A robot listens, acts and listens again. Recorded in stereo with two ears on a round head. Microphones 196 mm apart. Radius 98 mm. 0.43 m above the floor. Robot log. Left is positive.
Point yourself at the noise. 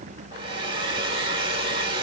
note: The hair dryer: about 25° right or 155° right.
cmd yaw -25
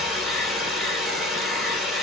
end: Facing the hair dryer, 1 to 2 m away.